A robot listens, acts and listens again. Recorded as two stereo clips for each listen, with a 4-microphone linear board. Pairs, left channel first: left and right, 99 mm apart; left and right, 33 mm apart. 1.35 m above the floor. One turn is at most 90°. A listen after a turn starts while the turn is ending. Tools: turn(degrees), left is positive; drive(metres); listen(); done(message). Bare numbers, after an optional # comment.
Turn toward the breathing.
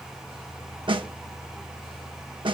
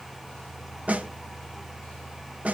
listen()
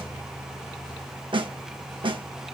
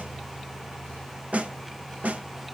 listen()
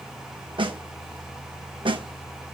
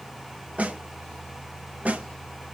done("I can't make out breathing to turn to.")